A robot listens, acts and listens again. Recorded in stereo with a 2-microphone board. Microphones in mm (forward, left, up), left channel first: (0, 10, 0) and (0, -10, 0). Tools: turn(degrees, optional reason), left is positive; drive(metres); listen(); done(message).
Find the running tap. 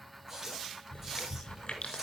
turn(degrees=-20, reason="The running tap: about 20° right or 160° right.")
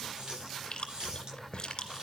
turn(degrees=-135, reason="So it is at 135° right.")
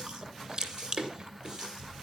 turn(degrees=-40, reason="The running tap is now 40° right.")
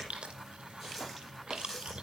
done("Facing the running tap.")